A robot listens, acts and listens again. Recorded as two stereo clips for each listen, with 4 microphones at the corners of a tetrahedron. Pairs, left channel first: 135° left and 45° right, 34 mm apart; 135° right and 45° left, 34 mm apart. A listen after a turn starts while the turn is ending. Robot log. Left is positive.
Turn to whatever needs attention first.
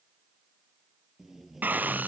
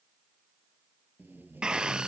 note: The scream: 20° right.
cmd yaw -20
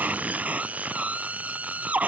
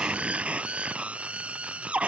end: Found it: a scream, straight ahead.